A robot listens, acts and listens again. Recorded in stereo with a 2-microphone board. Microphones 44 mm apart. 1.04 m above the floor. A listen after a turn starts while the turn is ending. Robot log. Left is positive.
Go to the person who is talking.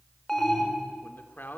note: The man speaking: about 45° left or 135° left.
cmd yaw +45
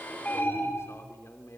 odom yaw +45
cmd idle
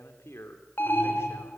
note: So it is at 85° left.
cmd yaw +85
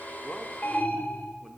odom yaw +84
cmd idle
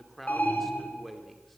cmd fwd 1.0
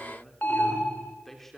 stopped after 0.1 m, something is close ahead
end: Blocked. The man speaking is further on, straight ahead.